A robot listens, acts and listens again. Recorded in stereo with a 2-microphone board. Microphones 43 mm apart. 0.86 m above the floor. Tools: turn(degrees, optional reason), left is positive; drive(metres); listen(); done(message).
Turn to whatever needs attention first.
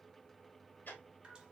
listen()
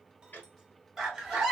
turn(degrees=-30)
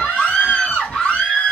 turn(degrees=25, reason="So it is at 25° left.")
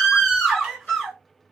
done("Found it: a scream, straight ahead.")